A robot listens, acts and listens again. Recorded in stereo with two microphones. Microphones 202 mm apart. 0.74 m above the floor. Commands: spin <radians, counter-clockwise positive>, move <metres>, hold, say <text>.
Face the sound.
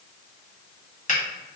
spin 0.70
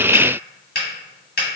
spin 1.48
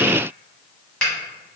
say Found it: a finger snap, straight ahead.